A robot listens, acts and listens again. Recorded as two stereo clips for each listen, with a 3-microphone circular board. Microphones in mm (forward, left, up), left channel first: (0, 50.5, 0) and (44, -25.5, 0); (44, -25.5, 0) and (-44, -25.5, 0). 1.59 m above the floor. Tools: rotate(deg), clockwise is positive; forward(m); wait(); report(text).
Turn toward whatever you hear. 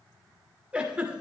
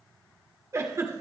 rotate(135)
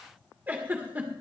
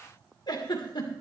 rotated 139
report("Found it: a giggle, straight ahead, 1 to 2 m away.")